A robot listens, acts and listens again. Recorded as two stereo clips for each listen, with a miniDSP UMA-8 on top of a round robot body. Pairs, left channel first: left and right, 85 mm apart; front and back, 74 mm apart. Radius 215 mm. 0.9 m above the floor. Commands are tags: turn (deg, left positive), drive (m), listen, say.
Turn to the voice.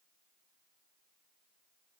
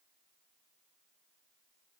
<listen/>
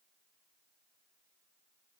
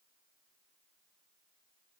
<listen/>
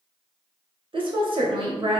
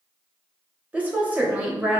<turn deg="-110"/>
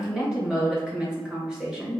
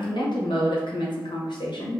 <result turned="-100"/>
<say>Found it: a woman speaking, straight ahead, under 1 m away.</say>